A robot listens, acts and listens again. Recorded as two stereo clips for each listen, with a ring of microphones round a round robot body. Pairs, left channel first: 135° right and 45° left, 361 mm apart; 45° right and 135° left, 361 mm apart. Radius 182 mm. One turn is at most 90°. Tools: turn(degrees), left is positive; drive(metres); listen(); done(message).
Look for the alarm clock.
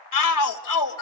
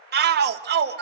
listen()
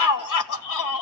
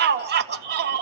listen()
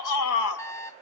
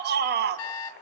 turn(degrees=-55)
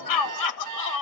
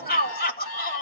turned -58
done("Found it: an alarm clock, straight ahead, 1 to 2 m away.")